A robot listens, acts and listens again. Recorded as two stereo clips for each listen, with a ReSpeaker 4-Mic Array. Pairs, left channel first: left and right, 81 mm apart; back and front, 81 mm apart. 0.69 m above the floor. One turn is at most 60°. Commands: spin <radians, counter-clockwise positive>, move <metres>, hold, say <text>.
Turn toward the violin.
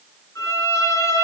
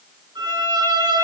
spin 0.61
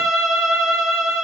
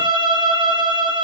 say Found it: a violin, straight ahead, over 4 m away.